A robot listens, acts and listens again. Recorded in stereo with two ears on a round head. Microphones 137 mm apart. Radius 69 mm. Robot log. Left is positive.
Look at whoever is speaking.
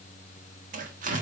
cmd idle
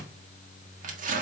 cmd idle
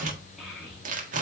cmd yaw +30
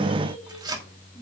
cmd idle
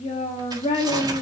note: So it is at 145° left.
cmd yaw +145
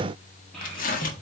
end: Facing the child speaking.